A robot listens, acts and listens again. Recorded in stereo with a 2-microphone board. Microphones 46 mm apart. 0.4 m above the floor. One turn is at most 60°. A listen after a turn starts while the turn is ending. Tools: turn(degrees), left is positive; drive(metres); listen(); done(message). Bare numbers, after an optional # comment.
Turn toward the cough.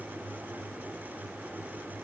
listen()
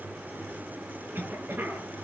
# The cough: about 50° right or 130° right.
turn(-50)
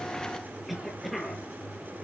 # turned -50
done("Found it: a cough, straight ahead.")